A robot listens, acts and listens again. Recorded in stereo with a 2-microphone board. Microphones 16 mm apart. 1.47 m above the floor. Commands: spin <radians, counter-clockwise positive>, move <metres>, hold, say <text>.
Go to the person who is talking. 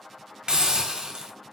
hold
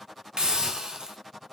hold
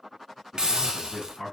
spin 1.05
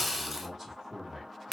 move 1.0
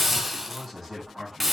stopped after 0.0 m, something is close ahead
say Blocked. The man speaking is further on, straight ahead.